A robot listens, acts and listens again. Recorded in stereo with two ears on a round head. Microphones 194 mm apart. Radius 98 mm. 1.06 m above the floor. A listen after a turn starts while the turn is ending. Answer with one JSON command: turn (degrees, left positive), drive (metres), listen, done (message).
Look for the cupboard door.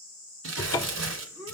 {"turn": 15}
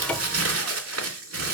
{"listen": true}
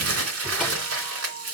{"listen": true}
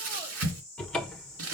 {"done": "Facing the cupboard door."}